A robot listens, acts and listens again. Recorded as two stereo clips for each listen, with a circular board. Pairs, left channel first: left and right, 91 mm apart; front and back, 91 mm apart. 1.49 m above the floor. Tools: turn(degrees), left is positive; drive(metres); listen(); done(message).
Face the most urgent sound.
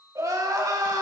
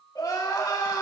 turn(degrees=-45)
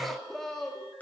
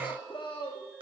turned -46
done("Found it: crying, straight ahead, 1 to 2 m away.")